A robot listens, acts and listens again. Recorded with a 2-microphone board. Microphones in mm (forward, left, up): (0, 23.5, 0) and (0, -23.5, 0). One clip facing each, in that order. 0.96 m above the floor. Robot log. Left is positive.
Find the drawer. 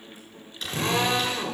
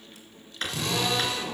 note: The drawer: about 50° right or 130° right.
cmd yaw -50
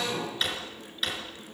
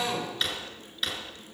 end: Found it: a drawer, straight ahead, over 4 m away.